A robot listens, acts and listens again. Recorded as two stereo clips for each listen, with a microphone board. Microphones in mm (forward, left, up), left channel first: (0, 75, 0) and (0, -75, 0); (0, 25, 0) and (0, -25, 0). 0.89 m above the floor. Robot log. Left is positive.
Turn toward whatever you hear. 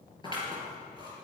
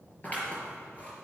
note: The scissors: about 30° left or 150° left.
cmd yaw +30
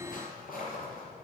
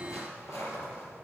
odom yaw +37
note: So it is at 110° left.
cmd yaw +110
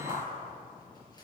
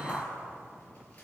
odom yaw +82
note: The scissors is now 30° left.
cmd yaw +30
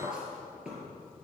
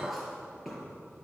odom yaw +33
end: Facing the scissors.